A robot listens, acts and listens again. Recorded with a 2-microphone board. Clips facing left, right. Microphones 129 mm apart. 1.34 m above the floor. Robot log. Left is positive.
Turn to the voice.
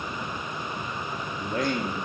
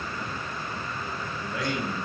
note: The man speaking: about 40° left or 140° left.
cmd yaw +40
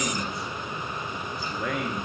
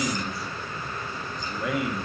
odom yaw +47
end: Facing the man speaking.